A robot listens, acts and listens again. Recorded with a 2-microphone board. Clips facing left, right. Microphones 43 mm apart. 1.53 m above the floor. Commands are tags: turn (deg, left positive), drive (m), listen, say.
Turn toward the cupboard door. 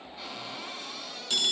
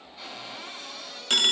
<turn deg="30"/>
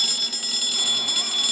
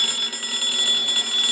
<listen/>
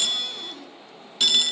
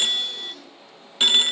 <listen/>
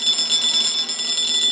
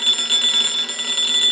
<say>I heard a cupboard door, but can't make it out now. It was about 25° right or 145° left.</say>